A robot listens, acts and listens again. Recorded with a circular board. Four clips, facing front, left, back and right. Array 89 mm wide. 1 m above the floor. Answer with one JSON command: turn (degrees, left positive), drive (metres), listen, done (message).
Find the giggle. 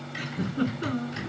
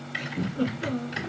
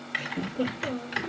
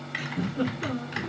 {"turn": -15}
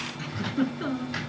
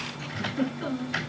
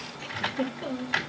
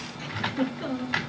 {"done": "Found it: a giggle, straight ahead, 2 to 4 m away."}